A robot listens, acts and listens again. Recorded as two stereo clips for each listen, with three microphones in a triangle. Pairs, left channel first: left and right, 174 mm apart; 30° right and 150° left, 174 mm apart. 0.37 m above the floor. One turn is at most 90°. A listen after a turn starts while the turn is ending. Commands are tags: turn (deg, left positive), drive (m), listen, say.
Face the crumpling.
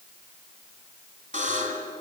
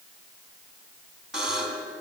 <listen/>
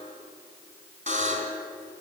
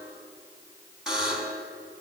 <listen/>
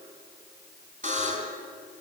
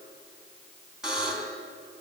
<say>I can't make out crumpling, only a buzzer.</say>